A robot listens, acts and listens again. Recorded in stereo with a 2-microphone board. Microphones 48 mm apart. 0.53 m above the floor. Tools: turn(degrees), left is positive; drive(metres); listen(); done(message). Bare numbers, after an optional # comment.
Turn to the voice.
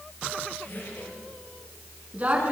# The woman speaking: about 30° right or 150° right.
turn(-30)
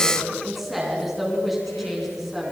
done("Facing the woman speaking.")